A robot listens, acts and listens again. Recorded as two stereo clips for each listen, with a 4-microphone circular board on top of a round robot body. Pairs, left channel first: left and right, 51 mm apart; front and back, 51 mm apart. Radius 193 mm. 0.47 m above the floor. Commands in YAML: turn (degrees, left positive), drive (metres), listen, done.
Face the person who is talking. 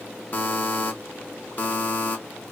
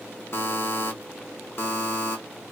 listen: true
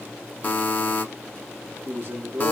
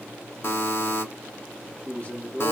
turn: -60
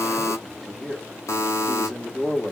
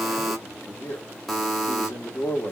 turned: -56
done: "Found it: a man speaking, straight ahead."